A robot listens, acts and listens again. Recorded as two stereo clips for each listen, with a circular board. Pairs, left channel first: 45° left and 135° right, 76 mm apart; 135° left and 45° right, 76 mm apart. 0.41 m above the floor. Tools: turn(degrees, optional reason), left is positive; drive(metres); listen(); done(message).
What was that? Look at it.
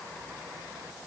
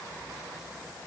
listen()
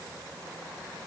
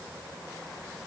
listen()
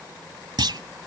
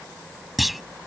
turn(degrees=-135, reason="The clunk: 135° right.")
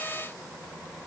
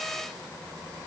done("Facing where the clunk came from. I can't hear it now.")